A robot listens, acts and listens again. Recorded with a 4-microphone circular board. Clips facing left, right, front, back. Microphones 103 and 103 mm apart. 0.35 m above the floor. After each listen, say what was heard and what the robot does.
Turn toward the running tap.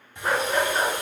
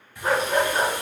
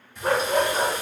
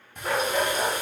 The running tap: 155° left. Turn 155° left.
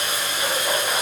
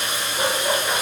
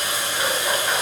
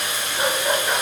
The running tap is now 50° left. Turn 50° left.
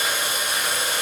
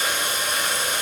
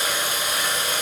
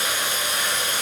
The running tap is now 10° left. Turn 10° left.
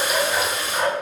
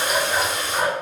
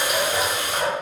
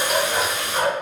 Facing the running tap.